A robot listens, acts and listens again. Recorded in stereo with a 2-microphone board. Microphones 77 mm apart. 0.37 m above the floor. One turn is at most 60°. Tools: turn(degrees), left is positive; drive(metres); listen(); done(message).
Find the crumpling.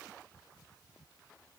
listen()
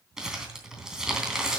turn(degrees=-30)
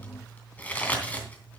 turn(degrees=20)
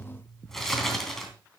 done("Found it: crumpling, straight ahead, 2 to 4 m away.")